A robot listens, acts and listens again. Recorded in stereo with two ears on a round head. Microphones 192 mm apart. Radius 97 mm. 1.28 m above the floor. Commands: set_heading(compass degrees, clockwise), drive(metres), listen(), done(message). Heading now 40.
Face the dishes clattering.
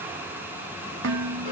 set_heading(100)
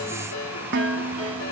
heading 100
set_heading(155)
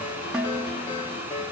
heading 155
done("Found it: dishes clattering, straight ahead, under 1 m away.")